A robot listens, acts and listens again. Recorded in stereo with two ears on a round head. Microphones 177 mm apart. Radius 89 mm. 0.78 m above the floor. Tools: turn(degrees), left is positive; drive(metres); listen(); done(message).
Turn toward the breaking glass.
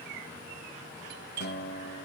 listen()
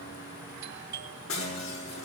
turn(degrees=90)
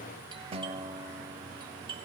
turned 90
done("I heard breaking glass from this way, but can't make it out now.")